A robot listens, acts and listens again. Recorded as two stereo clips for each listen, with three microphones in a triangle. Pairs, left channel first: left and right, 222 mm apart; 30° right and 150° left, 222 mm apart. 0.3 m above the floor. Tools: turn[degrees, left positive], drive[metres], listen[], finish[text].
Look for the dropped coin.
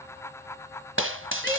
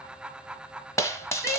Thought: The dropped coin: 105° right.
Action: turn[-105]
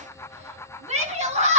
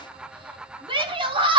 Action: finish[I heard a dropped coin from this way, but can't make it out now.]